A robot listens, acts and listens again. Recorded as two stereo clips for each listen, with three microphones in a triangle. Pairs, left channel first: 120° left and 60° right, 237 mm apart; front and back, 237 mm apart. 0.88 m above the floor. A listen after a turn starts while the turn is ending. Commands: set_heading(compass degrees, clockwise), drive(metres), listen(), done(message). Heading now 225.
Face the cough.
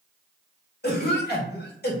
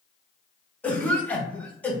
set_heading(145)
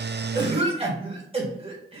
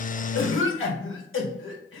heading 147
done("Found it: a cough, straight ahead, 1 to 2 m away.")